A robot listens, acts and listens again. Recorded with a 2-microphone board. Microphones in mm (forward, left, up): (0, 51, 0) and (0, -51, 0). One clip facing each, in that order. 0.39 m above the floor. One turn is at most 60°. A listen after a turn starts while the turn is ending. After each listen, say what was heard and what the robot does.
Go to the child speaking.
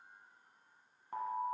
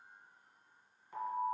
Keep listening.
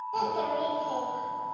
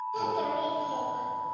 The child speaking: about 70° left or 110° left. Turn 60° left.
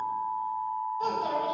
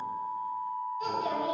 So it is at 40° left. Turn 40° left.
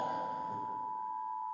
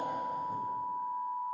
Keep listening.
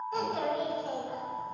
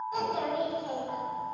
The child speaking is now 10° right. Turn 10° right.
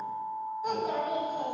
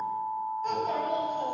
The child speaking is now 10° left. Turn 10° left.
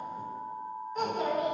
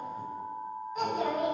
Drive 1.0 m forward.
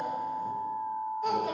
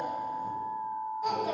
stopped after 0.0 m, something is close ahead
Something is in my way. I am facing the child speaking but have not reached it.